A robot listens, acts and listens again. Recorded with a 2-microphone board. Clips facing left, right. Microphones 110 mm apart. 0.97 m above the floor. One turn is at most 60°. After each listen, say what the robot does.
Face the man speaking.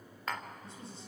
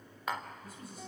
Turn 30° left.
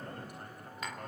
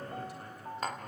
Turn 60° left.
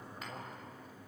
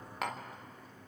Turn 60° left.
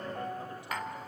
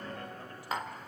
Keep listening.
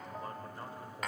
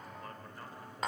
Turn 25° left.
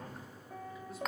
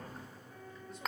Keep listening.
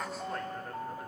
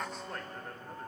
Keep listening.
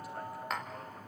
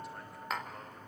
Facing where the man speaking came from. I can't hear it now.